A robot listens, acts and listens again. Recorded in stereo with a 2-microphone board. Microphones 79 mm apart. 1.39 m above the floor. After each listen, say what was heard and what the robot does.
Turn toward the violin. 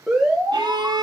The violin: about 70° right or 110° right. Turn 70° right.
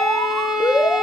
Found it: a violin, straight ahead.